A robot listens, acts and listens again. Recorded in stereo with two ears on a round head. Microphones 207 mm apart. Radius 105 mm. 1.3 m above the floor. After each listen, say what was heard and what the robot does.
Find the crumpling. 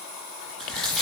Turn 30° left.
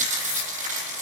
So it is at 30° right. Turn 30° right.
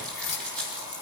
Facing the crumpling, over 4 m away.